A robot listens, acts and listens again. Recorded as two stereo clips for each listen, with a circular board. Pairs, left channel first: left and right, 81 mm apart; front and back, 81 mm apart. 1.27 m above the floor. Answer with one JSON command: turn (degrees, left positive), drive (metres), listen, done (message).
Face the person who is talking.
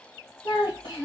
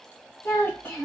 {"turn": 65}
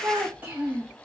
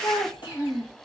{"turn": -20}
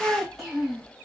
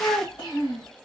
{"done": "Found it: a child speaking, straight ahead."}